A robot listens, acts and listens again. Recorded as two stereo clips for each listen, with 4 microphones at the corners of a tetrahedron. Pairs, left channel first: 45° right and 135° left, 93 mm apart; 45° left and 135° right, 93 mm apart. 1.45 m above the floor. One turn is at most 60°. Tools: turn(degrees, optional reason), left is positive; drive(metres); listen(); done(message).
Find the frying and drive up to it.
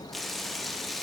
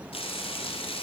turn(degrees=45, reason="The frying: 45° left.")
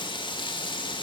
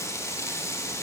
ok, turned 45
turn(degrees=-15, reason="The frying is now 15° right.")
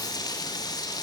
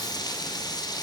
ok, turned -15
drive(metres=1.0)
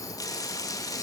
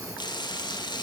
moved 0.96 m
drive(metres=1.0)
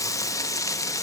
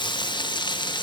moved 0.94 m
turn(degrees=10, reason="The frying is now 10° left.")
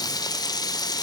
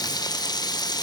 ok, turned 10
drive(metres=1.0)
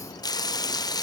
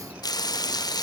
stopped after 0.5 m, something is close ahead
done("I am next to the frying.")